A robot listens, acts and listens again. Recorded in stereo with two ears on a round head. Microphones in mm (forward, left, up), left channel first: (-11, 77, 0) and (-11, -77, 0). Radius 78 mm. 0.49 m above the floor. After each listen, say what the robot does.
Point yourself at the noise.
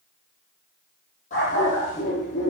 Turn 45° left.
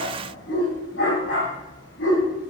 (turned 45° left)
Turn 95° left.
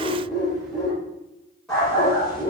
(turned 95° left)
Facing the dog barking, over 4 m away.